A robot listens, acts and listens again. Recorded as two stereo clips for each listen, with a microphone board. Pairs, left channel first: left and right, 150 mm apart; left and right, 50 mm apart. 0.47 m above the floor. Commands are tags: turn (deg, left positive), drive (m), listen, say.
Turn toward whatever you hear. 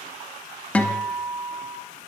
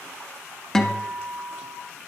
<turn deg="30"/>
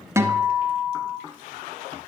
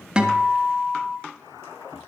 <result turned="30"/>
<turn deg="-20"/>
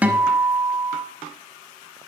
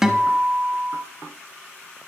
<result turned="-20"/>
<turn deg="-10"/>
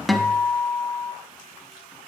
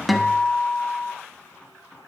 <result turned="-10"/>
<say>Found it: a guitar, straight ahead, under 1 m away.</say>